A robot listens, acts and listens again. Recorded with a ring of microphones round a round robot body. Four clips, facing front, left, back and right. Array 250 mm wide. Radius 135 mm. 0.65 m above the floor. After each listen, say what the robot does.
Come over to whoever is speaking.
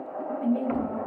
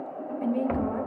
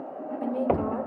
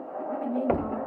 Turn 155° left.
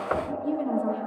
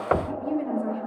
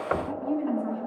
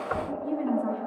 Turn 30° left.
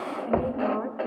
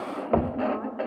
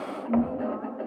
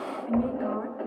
Turn 10° right.
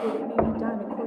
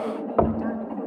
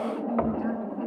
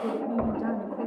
Drive 1.0 m forward.
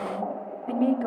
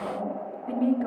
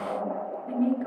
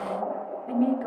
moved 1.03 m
Drive 1.0 m forward.
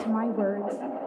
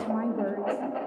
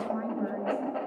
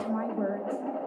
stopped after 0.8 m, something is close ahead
I am next to the woman speaking.